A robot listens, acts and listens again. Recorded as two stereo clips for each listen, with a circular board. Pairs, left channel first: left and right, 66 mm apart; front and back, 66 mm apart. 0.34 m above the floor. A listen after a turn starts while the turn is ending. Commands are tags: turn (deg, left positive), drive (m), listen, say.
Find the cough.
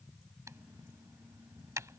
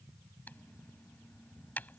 <listen/>
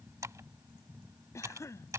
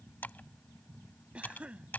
<turn deg="110"/>
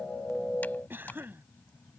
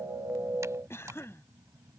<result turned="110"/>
<turn deg="-40"/>
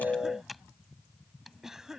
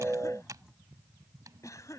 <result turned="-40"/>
<turn deg="-10"/>
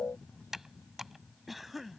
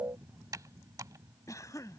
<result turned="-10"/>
<say>Facing the cough.</say>